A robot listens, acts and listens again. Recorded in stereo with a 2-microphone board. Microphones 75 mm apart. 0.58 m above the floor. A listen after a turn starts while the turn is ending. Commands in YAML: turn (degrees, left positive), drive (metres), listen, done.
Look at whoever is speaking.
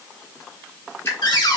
listen: true
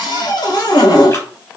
listen: true
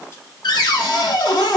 done: "I can't make out anyone speaking to turn to."